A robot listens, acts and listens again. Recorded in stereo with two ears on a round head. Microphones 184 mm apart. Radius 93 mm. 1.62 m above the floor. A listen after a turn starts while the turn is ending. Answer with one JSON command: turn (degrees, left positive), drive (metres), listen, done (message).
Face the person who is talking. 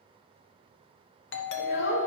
{"turn": 55}
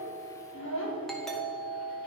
{"turn": 65}
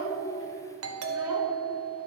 {"listen": true}
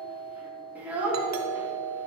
{"turn": -10}
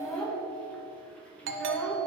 {"done": "Facing the child speaking."}